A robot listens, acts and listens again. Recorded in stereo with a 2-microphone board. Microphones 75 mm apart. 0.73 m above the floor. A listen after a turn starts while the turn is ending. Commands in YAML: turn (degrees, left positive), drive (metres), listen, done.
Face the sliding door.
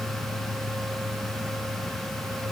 listen: true
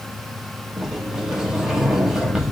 turn: -30
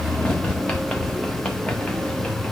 turn: 20
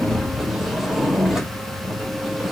done: "Found it: a sliding door, straight ahead, 1 to 2 m away."